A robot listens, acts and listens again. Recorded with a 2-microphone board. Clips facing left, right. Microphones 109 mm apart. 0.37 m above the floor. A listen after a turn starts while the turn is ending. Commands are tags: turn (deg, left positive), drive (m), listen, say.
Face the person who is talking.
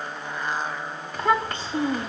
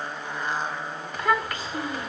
<turn deg="30"/>
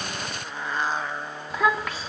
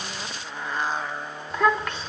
<say>Found it: a child speaking, straight ahead, 2 to 4 m away.</say>